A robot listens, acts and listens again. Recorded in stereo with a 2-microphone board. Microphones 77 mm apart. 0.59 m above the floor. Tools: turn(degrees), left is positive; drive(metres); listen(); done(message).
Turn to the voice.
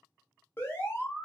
listen()
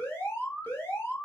listen()
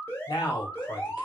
turn(degrees=70)
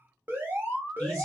listen()
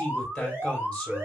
turn(degrees=10)
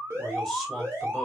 done("Found it: a man speaking, straight ahead.")